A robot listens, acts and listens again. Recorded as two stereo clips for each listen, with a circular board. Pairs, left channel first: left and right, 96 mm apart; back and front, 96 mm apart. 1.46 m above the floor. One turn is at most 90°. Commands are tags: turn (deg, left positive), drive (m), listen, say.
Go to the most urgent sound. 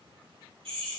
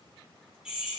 <listen/>
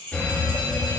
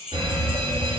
<turn deg="10"/>
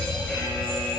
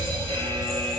<drive m="1.0"/>
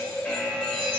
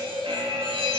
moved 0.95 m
<turn deg="10"/>
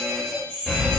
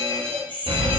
<drive m="1.0"/>
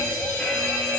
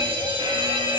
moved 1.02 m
<turn deg="10"/>
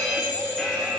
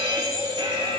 <drive m="1.0"/>
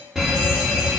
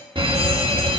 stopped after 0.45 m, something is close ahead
<say>I am next to the fire alarm.</say>